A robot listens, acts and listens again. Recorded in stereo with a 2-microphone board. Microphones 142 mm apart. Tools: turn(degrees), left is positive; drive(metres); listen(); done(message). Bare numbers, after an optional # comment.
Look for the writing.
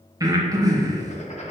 # The writing: about 50° left or 130° left.
turn(50)
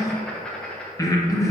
done("Found it: writing, straight ahead, 1 to 2 m away.")